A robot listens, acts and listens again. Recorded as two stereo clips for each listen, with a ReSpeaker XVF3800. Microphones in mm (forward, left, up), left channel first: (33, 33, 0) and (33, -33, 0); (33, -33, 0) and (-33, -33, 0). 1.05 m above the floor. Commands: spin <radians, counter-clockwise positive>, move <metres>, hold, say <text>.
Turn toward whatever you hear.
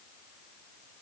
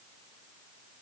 hold
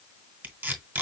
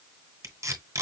spin -2.53
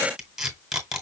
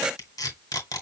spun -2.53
say Facing the tape being pulled.